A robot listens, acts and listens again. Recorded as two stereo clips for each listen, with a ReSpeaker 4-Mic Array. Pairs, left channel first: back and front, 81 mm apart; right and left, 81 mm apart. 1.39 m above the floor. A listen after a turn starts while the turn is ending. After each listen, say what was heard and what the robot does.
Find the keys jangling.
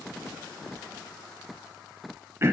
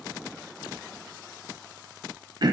Keep listening.
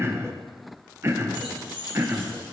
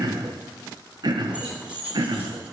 The keys jangling: 165° left. Turn 165° left.
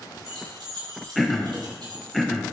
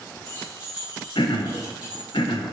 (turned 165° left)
The keys jangling is now 15° left. Turn 15° left.
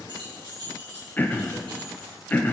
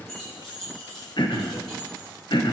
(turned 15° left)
Facing the keys jangling.